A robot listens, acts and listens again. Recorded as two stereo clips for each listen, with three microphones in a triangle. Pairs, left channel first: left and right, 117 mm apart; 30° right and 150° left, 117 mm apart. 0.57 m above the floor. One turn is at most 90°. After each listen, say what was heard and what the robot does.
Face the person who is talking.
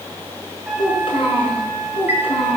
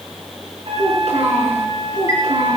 The child speaking: 125° left. Turn 90° left.
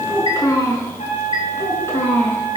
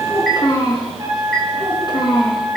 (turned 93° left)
The child speaking is now 20° left. Turn 20° left.
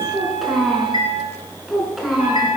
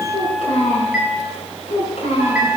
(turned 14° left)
Facing the child speaking.